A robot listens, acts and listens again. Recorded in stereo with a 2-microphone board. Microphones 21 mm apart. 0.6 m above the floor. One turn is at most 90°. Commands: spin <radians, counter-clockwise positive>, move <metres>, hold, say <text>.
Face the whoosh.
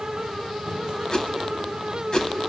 spin 0.61
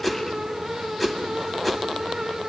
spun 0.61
say Facing the whoosh.